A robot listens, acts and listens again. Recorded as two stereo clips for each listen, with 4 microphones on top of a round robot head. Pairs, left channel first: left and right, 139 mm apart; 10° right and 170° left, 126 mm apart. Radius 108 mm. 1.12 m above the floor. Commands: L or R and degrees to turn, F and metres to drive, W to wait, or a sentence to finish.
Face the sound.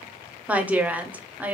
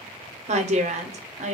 R170
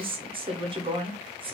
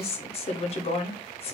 R45
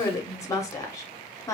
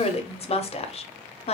L25
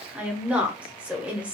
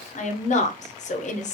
R10
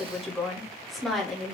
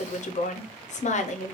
Found it: a woman speaking, straight ahead.